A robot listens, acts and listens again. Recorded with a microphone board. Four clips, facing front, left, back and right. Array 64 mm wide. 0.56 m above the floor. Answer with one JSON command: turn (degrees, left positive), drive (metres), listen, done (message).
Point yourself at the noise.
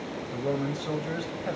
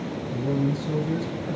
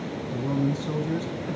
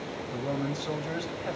{"turn": -30}
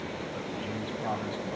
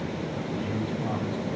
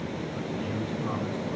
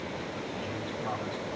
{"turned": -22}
{"done": "Found it: a man speaking, straight ahead, over 4 m away."}